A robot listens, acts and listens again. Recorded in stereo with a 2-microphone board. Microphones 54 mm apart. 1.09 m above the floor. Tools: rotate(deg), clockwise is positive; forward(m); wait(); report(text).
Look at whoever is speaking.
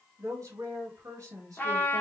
rotate(90)
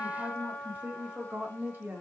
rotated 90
rotate(40)
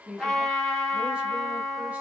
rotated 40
rotate(10)
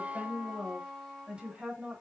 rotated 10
rotate(20)
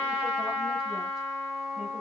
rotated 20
wait()
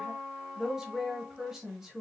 rotate(10)
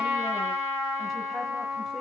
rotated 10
wait()
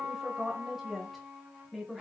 report("Facing the woman speaking, 1 to 2 m away.")